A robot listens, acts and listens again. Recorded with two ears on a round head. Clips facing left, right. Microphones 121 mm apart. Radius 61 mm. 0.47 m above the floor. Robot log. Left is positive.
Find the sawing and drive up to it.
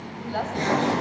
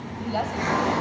note: The sawing: about 30° left or 150° left.
cmd yaw +30
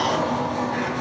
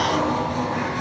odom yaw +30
cmd fwd 1.0
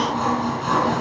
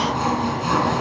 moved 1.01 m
cmd fwd 1.0
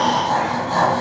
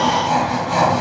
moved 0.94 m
note: The sawing is now 15° right.
cmd yaw -15
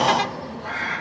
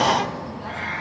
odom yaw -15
cmd idle
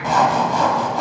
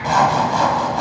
cmd fwd 1.0
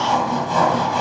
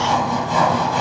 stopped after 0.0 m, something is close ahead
end: I am next to the sawing.